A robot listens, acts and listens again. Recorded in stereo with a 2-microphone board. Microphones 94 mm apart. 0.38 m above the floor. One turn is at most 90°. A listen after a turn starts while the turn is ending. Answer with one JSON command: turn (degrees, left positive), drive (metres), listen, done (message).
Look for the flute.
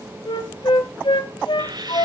{"turn": 65}
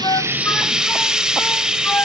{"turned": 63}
{"listen": true}
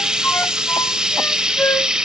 {"turn": 30}
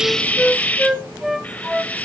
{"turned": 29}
{"done": "Facing the flute."}